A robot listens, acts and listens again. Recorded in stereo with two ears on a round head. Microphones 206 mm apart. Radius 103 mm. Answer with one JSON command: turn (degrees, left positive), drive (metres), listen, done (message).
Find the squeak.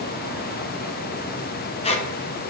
{"turn": 25}
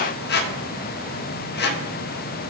{"turn": 120}
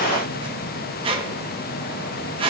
{"turn": -30}
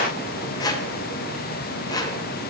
{"turn": 20}
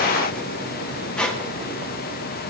{"done": "Found it: a squeak, straight ahead, under 1 m away."}